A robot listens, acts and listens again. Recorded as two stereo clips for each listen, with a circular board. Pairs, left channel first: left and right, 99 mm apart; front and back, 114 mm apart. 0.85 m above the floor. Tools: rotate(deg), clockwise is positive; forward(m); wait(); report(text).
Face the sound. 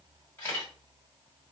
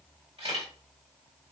rotate(-150)
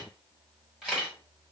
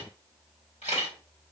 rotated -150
report("Found it: a camera shutter, straight ahead.")